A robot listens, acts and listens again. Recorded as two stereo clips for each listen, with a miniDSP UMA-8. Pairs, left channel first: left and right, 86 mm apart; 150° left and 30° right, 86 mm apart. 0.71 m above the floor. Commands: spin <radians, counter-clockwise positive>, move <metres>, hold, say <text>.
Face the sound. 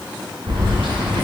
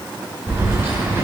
spin -1.57
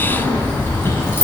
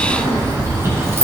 spin 0.52
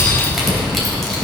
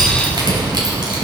say Found it: keys jangling, straight ahead.